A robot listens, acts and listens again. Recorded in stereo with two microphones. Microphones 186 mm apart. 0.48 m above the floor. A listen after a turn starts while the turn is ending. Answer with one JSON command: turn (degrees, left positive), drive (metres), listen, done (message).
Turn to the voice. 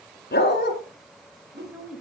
{"turn": -30}
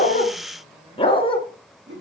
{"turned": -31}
{"listen": true}
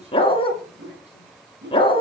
{"listen": true}
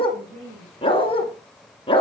{"turn": -145}
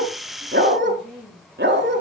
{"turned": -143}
{"done": "Facing the woman speaking, over 4 m away."}